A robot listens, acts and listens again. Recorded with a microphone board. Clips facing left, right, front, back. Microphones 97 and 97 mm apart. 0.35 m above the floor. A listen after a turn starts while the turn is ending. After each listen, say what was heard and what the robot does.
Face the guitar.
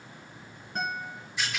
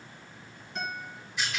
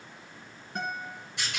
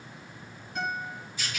The guitar: 45° left. Turn 45° left.
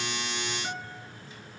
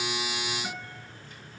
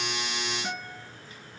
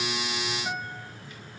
The guitar is now 10° right. Turn 10° right.
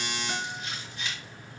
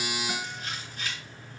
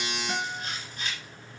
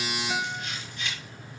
Keep listening.
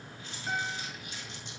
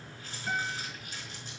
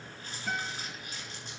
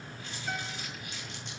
Found it: a guitar, straight ahead.